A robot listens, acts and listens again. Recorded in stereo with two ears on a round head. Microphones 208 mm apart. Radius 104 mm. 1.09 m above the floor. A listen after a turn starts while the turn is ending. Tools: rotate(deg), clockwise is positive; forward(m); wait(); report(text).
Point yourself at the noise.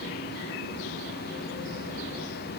wait()
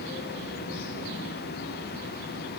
wait()
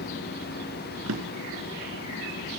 rotate(65)
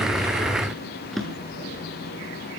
report("Facing the drawer.")